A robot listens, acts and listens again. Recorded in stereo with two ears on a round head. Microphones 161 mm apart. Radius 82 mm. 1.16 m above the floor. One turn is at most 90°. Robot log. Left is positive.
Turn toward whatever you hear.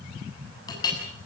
note: The clink: about 20° left or 160° left.
cmd yaw +20
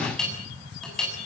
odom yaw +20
end: Facing the clink.